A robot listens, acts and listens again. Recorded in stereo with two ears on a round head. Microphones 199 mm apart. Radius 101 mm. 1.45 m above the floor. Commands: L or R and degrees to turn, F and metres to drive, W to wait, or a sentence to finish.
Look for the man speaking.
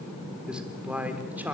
R30
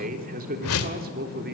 R135
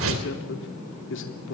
L55
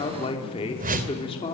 L25
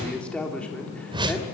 Found it: a man speaking, straight ahead, 2 to 4 m away.